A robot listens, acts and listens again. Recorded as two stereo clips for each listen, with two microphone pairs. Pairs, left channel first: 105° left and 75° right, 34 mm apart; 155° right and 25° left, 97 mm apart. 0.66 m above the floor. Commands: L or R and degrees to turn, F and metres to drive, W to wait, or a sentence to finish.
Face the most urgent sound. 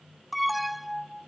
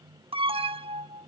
L15
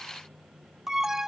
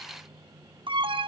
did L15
Found it: an alarm, straight ahead.